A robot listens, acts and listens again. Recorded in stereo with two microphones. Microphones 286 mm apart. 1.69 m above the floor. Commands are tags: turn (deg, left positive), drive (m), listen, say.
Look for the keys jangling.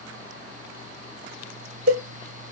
<listen/>
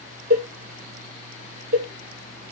<listen/>
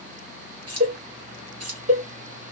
<turn deg="-60"/>
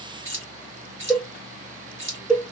<turn deg="-45"/>
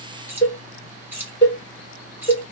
<say>Facing the keys jangling.</say>